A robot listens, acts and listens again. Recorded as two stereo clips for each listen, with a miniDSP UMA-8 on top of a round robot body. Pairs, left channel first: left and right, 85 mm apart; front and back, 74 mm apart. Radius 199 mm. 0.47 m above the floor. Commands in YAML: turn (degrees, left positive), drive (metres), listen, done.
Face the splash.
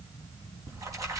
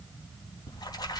turn: -35
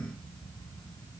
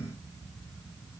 done: "I heard a splash from this way, but can't make it out now."